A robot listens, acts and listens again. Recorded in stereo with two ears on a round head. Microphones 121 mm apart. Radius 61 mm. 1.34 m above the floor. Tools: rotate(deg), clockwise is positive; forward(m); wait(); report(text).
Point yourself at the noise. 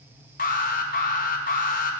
rotate(-65)
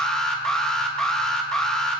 report("Facing the alarm.")